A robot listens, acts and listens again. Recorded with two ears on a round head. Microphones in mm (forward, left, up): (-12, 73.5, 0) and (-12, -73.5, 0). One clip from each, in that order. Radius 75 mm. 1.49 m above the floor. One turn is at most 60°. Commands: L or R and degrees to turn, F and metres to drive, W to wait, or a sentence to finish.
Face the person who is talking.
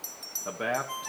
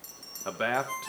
R60
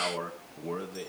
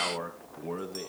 Found it: a man speaking, straight ahead.